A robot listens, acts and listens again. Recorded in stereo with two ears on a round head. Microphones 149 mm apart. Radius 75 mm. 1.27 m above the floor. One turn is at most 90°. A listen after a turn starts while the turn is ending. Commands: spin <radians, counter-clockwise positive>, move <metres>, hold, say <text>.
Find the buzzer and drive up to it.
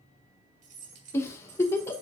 hold
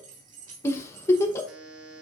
spin -1.57
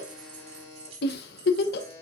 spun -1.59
spin 0.26
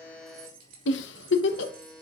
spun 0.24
move 1.0
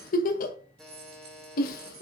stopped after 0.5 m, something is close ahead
say Blocked. The buzzer is further on, straight ahead.